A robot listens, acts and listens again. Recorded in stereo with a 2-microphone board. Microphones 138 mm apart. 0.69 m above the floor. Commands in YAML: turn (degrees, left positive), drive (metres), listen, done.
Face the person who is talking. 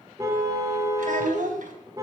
turn: -90
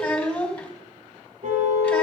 turn: 10
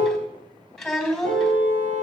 done: "Facing the child speaking."